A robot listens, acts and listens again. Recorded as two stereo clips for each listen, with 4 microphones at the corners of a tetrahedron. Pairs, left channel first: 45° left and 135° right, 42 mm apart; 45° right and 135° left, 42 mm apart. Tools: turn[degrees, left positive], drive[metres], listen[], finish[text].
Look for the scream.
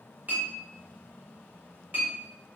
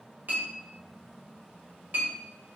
Action: listen[]
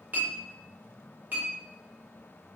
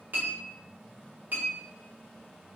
Action: listen[]
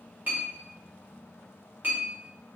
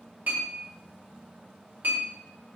Action: finish[I can't make out a scream, only a clink.]